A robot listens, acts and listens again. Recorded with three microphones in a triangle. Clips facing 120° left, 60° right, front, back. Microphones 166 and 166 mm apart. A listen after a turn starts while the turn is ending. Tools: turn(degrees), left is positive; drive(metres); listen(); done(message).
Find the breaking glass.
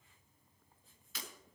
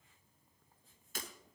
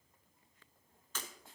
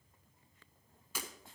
turn(degrees=-100)
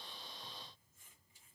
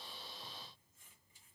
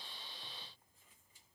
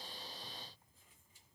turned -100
done("I heard breaking glass from this way, but can't make it out now.")